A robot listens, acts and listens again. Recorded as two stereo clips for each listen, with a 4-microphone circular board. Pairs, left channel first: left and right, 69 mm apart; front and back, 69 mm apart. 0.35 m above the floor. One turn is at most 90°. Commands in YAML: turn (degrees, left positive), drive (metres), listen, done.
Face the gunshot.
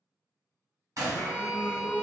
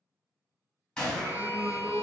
turn: -75
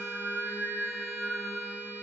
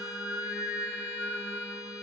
done: "I heard a gunshot from this way, but can't make it out now."